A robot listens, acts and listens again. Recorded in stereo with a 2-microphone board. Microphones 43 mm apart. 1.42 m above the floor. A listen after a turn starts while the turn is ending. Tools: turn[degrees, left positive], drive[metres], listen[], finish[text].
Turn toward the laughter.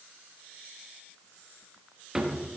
Action: listen[]
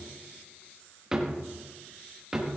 Action: listen[]
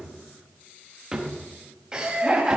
Thought: The laughter: about 20° right or 160° right.
Action: turn[-20]
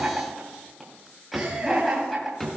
Action: finish[Found it: laughter, straight ahead, 2 to 4 m away.]